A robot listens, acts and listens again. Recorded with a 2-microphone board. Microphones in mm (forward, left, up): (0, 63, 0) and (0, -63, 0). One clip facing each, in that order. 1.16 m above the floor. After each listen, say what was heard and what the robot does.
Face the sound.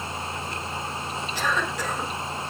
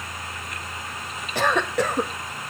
The cough: about 65° right or 115° right. Turn 65° right.
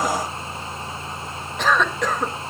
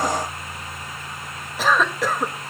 Facing the cough, 1 to 2 m away.